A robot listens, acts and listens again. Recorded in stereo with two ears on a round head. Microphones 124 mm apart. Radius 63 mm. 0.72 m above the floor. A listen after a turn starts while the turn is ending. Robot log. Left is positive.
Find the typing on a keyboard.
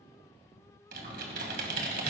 cmd yaw -90
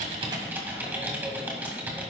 note: So it is at 15° right.
cmd yaw -15
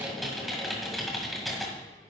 end: Found it: typing on a keyboard, straight ahead.